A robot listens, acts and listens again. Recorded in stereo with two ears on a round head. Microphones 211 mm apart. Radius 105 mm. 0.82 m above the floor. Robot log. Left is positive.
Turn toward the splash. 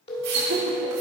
cmd yaw -90
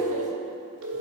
end: Facing where the splash came from. I can't hear it now.